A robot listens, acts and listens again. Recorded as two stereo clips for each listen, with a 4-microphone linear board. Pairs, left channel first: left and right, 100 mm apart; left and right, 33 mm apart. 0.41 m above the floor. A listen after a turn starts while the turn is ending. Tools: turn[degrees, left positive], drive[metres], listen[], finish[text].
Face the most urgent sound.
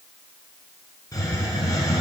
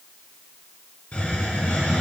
Action: listen[]
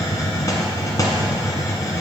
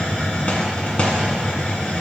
Action: listen[]
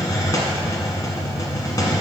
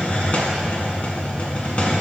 Action: finish[I can't make out anything urgent to turn to.]